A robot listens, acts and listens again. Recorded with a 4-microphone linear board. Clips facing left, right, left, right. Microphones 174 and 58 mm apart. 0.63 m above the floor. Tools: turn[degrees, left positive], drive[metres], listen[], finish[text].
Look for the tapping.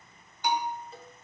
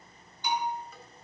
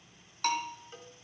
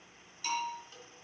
Action: listen[]
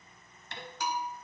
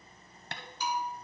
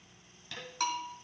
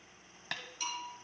Thought: The tapping: about 60° right or 120° right.
Action: turn[-60]
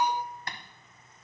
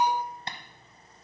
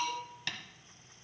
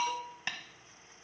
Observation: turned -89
Thought: So it is at 25° right.
Action: turn[-25]
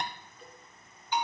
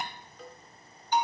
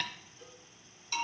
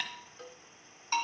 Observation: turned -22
Action: listen[]
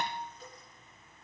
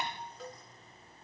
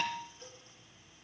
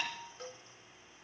Action: listen[]
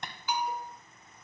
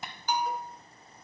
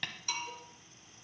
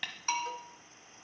Action: finish[Facing the tapping.]